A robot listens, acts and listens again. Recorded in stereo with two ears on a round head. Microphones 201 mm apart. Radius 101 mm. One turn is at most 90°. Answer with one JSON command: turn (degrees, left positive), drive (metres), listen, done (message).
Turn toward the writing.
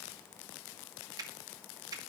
{"listen": true}
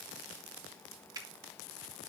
{"listen": true}
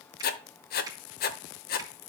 {"turn": 45}
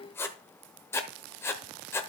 {"turn": 15}
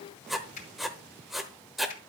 {"done": "Found it: writing, straight ahead, under 1 m away."}